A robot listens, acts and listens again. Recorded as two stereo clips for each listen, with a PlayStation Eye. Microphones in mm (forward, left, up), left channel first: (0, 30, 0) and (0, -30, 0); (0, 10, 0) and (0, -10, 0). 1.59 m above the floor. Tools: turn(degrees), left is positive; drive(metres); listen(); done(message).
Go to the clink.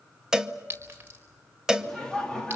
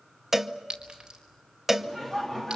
turn(degrees=-35)
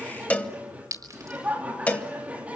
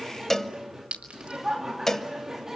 turn(degrees=-105)
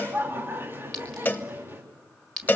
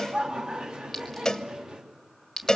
turn(degrees=10)
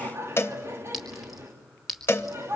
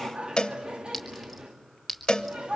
drive(metres=1.0)
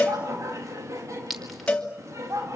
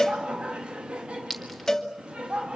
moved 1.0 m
drive(metres=1.0)
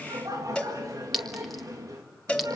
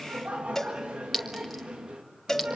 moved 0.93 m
drive(metres=1.0)
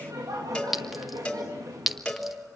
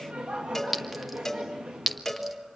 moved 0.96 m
drive(metres=1.0)
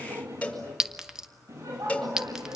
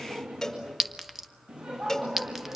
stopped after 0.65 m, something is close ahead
turn(degrees=-10)
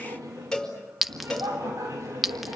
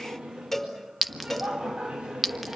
done("Arrived at the clink, straight ahead.")